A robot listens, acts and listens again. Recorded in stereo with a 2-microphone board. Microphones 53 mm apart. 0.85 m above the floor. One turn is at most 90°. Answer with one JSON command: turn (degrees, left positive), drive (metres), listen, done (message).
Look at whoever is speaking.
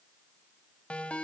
{"listen": true}
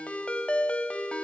{"listen": true}
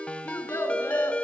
{"turn": 70}
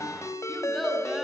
{"done": "Found it: a child speaking, straight ahead, over 4 m away."}